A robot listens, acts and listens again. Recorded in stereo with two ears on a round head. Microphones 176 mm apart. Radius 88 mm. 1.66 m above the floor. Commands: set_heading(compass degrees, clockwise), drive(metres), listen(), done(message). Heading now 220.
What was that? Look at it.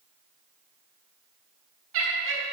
set_heading(290)
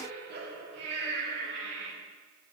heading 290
set_heading(355)
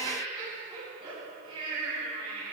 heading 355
set_heading(25)
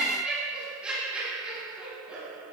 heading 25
done("Facing the laughter, 2 to 4 m away.")